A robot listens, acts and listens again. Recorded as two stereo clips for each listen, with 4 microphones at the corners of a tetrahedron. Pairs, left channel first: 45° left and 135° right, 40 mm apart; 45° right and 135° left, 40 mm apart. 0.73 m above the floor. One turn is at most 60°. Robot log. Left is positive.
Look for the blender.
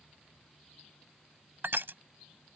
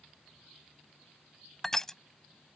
cmd idle
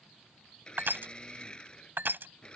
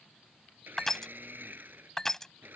note: The blender: 110° left.
cmd yaw +60
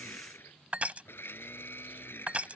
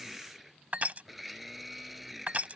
note: The blender is now 50° left.
cmd yaw +50
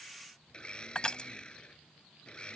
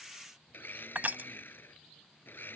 note: The blender is now 20° right.
cmd yaw -20
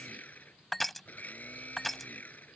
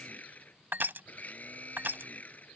end: Found it: a blender, straight ahead.